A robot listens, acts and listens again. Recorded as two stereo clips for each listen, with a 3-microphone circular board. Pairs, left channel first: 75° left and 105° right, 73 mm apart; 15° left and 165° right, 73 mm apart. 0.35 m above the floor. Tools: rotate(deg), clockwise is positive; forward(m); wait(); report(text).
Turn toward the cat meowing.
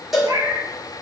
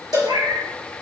rotate(145)
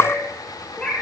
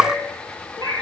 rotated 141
report("Facing the cat meowing, 2 to 4 m away.")